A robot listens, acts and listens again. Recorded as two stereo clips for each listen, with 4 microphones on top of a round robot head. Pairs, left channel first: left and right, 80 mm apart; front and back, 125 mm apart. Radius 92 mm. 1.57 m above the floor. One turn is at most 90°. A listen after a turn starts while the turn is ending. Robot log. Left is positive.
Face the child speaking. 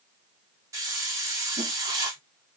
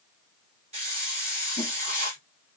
cmd idle
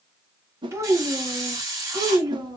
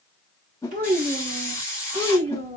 note: The child speaking: 130° right.
cmd yaw -90
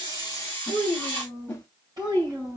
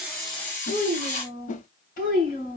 note: The child speaking is now 25° right.
cmd yaw -25
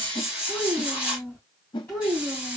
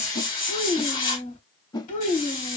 note: The child speaking is now 15° left.
cmd yaw +15
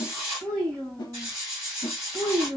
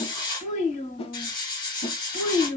end: Found it: a child speaking, straight ahead.